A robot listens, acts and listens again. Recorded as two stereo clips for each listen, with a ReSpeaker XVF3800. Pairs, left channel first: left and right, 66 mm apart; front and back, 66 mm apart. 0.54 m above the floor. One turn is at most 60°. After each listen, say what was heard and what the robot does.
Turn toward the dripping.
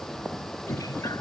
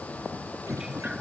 The dripping: 105° left. Turn 60° left.
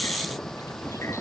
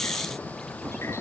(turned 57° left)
Nothing new. It was at 45° left. Turn 45° left.
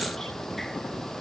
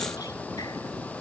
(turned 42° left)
Keep listening.
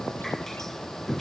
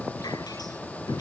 Found it: dripping, straight ahead.